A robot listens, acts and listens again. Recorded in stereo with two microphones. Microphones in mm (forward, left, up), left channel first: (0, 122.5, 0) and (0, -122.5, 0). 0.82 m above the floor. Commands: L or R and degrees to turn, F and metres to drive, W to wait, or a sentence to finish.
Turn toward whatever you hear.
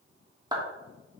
R15
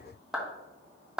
Found it: a clap, straight ahead.